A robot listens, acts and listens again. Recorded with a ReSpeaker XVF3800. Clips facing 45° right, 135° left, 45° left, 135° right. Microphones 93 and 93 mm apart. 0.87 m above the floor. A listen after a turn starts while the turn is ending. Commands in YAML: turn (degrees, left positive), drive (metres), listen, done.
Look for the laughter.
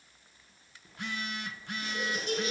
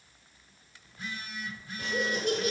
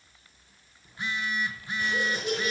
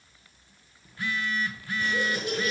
turn: 115
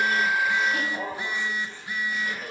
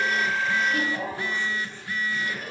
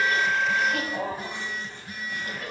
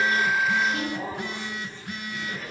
turn: 30
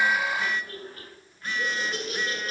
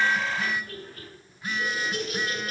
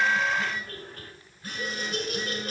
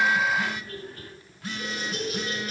done: "Found it: laughter, straight ahead, over 4 m away."